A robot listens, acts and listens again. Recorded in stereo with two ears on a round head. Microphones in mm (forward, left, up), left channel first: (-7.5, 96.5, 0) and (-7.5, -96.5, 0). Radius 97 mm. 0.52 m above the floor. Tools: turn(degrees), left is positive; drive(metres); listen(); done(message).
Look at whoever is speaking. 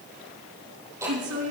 turn(degrees=-75)
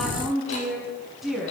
done("Found it: a woman speaking, straight ahead.")